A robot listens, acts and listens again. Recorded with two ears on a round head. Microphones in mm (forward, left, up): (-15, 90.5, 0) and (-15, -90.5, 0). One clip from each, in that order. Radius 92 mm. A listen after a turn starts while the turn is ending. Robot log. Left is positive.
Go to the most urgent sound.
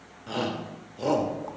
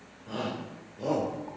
note: The shout: about 55° left or 125° left.
cmd yaw +55
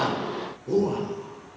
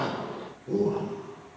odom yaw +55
note: So it is at 65° left.
cmd yaw +65
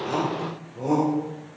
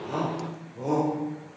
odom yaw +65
cmd fwd 1.0
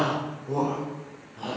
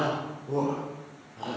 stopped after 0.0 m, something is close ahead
end: Blocked. The shout is further on, straight ahead.